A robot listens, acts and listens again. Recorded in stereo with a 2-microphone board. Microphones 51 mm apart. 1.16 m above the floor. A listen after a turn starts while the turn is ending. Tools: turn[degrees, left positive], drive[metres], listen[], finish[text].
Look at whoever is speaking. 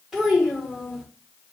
Action: turn[-30]
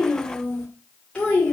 Thought: So it is at 20° left.
Action: turn[20]
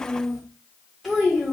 Action: finish[Found it: a child speaking, straight ahead, 1 to 2 m away.]